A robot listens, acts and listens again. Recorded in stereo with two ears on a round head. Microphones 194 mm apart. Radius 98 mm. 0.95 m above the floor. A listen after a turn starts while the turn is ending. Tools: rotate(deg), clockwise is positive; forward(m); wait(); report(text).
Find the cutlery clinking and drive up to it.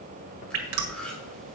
rotate(-30)
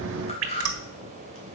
rotate(-145)
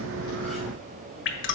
wait()
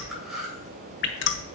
forward(1.0)
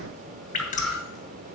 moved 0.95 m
forward(1.0)
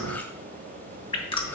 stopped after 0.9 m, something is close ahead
rotate(-10)
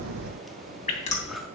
report("Arrived at the cutlery clinking, straight ahead.")